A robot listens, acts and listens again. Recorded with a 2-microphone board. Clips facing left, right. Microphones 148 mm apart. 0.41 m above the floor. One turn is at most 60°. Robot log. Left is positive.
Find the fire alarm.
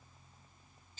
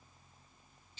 cmd idle
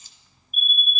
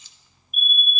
note: The fire alarm: about 40° left or 140° left.
cmd yaw +40
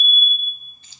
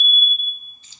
end: Facing the fire alarm, over 4 m away.